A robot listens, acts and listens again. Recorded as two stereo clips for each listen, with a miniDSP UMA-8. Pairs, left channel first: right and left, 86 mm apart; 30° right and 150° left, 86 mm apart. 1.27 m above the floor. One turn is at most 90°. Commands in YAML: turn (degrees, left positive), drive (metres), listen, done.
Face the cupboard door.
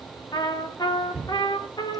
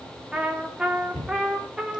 turn: -15
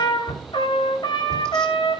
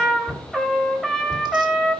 done: "Found it: a cupboard door, straight ahead, over 4 m away."